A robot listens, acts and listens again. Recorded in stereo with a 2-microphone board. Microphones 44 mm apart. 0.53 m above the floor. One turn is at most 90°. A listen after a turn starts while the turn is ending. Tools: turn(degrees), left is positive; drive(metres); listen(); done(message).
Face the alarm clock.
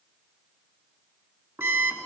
turn(degrees=-70)
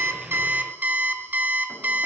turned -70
turn(degrees=-40)
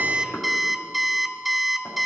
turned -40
done("Found it: an alarm clock, straight ahead.")